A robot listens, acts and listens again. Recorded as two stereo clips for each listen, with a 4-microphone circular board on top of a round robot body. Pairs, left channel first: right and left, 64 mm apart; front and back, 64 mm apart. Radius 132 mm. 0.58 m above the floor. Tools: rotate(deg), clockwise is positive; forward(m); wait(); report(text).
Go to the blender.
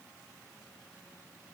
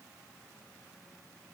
wait()
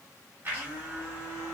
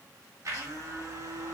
rotate(-150)
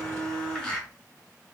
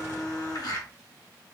rotate(10)
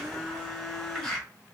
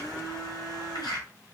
forward(1.0)
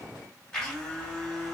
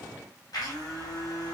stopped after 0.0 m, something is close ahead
rotate(10)
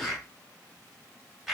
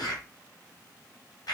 report("Blocked. The blender is further on, straight ahead.")